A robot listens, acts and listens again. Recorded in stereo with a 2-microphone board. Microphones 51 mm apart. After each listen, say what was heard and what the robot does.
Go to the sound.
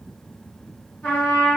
The trumpet: about 35° left or 145° left. Turn 35° left.
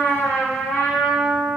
So it is at 105° left. Turn 105° left.
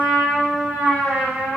The trumpet is now 15° right. Turn 15° right.
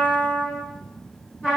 Drive 1.0 m forward.
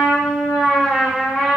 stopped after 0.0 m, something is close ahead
Blocked. The trumpet is further on, straight ahead.